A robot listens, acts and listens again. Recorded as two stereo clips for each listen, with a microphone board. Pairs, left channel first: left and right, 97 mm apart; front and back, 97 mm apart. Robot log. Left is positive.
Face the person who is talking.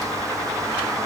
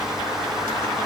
cmd idle
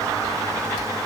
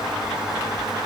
cmd idle
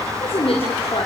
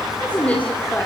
note: The woman speaking: 75° left.
cmd yaw +75
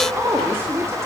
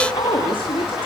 note: The woman speaking is now 25° right.
cmd yaw -25
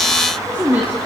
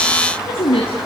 note: The woman speaking is now 15° right.
cmd yaw -15
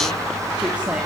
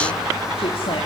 cmd idle
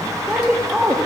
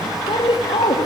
note: The woman speaking is now 10° right.
cmd yaw -10
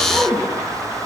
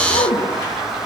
end: Found it: a woman speaking, straight ahead.